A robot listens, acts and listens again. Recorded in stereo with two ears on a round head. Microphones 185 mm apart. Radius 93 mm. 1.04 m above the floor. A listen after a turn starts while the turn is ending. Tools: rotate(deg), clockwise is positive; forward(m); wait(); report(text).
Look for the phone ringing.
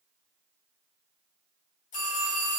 rotate(-90)
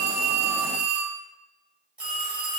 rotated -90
report("Facing the phone ringing, 1 to 2 m away.")